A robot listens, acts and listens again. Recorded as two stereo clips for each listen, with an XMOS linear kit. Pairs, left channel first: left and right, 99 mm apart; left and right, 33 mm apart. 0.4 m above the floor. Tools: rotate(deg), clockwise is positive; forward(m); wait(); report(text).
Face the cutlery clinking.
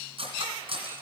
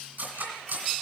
rotate(90)
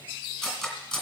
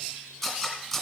report("Found it: cutlery clinking, straight ahead, 2 to 4 m away.")